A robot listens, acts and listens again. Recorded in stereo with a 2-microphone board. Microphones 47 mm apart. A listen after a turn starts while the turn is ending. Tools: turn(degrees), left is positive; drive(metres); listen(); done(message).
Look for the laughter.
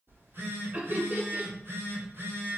turn(degrees=-40)
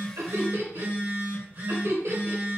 turn(degrees=-100)
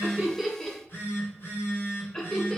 turn(degrees=10)
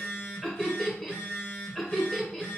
done("Found it: laughter, straight ahead, 1 to 2 m away.")